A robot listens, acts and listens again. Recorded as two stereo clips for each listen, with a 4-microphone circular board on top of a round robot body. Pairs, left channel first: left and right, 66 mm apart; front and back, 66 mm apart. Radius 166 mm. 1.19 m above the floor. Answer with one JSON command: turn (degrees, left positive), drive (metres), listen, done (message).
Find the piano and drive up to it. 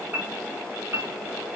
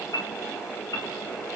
{"turn": -35}
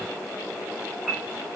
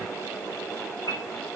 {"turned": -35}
{"turn": -10}
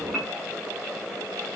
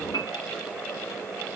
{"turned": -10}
{"drive": 1.0}
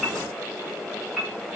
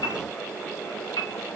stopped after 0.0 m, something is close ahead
{"done": "Something is in my way. I am facing the piano but have not reached it."}